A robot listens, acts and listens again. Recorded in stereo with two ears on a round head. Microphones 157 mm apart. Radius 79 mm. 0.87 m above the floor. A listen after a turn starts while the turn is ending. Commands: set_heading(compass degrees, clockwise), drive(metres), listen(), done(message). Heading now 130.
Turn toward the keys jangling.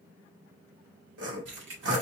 set_heading(220)
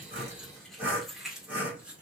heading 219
done("Found it: keys jangling, straight ahead.")